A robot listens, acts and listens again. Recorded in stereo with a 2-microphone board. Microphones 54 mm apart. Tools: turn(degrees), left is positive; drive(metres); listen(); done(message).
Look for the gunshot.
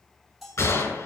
turn(degrees=70)
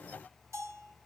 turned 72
listen()
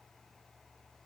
done("I heard a gunshot, but can't make it out now. It was about straight ahead or 35° left.")